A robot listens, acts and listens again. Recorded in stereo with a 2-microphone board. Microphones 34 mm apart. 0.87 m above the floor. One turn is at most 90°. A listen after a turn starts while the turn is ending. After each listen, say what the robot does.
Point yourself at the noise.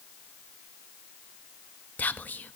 Turn 60° left.
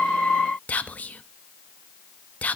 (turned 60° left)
Turn 55° left.
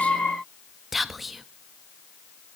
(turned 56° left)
Facing the whispering, under 1 m away.